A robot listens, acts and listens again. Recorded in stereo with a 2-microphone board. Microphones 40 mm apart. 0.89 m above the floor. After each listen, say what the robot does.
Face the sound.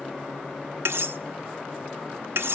Turn 90° right.
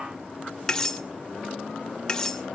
Turn 15° left.
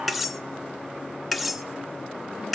Facing the cutlery clinking.